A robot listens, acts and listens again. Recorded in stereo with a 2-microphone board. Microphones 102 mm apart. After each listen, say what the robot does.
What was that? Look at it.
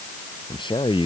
Turn 55° left.
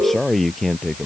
Facing the man speaking.